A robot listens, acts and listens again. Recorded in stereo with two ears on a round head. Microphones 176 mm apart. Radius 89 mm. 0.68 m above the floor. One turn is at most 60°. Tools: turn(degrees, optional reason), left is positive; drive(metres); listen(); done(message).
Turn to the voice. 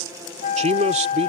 turn(degrees=-35, reason="The man speaking: about 35° right or 145° right.")
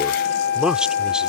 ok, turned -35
done("Facing the man speaking.")